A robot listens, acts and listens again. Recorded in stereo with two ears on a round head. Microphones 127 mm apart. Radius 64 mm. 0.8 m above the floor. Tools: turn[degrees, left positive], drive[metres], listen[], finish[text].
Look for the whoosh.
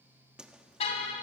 Action: turn[-30]
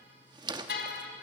Thought: So it is at 145° right.
Action: turn[-145]
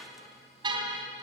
Action: listen[]
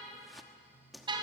Action: finish[Facing the whoosh, 1 to 2 m away.]